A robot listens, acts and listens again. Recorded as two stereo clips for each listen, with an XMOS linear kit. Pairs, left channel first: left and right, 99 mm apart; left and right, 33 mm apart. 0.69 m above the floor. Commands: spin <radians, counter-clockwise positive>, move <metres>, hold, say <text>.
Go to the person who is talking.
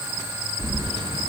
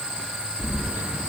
hold
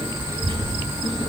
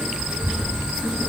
spin -0.61
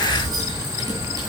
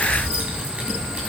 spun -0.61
hold
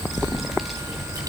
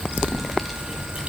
move 1.0
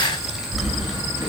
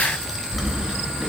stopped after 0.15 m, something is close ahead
say Something is in my way. I am facing the child speaking but have not reached it.